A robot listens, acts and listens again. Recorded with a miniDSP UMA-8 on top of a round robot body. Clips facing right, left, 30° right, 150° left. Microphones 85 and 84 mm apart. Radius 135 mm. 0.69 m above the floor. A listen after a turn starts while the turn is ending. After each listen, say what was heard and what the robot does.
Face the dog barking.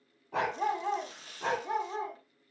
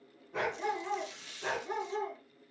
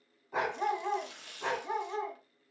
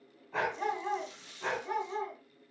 The dog barking: 100° right. Turn 100° right.
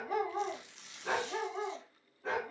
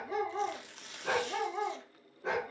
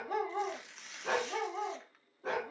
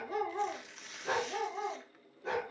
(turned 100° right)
The dog barking is now 15° left. Turn 15° left.
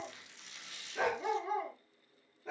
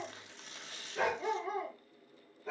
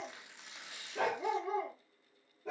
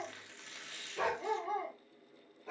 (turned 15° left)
Found it: a dog barking, straight ahead.